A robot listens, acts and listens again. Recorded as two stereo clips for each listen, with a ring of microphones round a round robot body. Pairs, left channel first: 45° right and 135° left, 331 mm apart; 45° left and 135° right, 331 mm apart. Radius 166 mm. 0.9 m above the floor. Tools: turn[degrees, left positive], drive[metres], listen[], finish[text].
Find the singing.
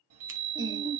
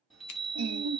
Thought: The singing: 145° right.
Action: turn[-145]
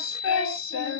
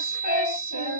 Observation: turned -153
Action: finish[Facing the singing, 1 to 2 m away.]